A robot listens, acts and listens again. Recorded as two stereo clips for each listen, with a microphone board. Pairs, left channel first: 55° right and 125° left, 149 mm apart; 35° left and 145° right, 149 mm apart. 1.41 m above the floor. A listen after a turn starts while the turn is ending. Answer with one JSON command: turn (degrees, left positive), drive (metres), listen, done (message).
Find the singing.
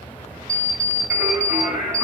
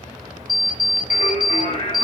{"turn": 35}
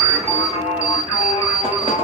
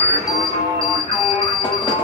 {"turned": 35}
{"turn": -10}
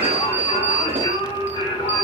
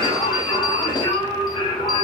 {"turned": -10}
{"turn": -15}
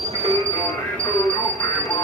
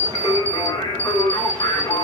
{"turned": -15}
{"done": "Facing the singing."}